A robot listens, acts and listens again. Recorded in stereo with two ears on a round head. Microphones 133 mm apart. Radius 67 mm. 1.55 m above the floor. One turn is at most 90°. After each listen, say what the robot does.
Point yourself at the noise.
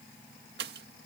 Turn 90° right.
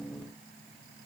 Facing where the pop came from. I can't hear it now.